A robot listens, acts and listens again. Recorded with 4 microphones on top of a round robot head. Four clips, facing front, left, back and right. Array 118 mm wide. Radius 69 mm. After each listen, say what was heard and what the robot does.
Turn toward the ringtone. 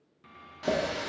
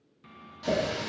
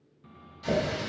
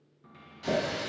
Keep listening.
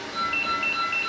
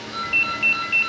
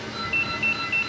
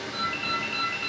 The ringtone: 90° left. Turn 90° left.
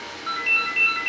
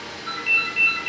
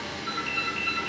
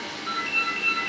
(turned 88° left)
Found it: a ringtone, straight ahead, under 1 m away.